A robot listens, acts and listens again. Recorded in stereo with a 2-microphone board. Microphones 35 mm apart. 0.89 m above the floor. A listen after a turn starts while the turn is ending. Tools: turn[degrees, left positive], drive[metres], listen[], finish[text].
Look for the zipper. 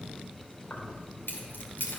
Action: listen[]
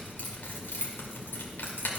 Action: listen[]
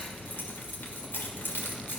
Action: finish[I can't make out a zipper, only keys jangling.]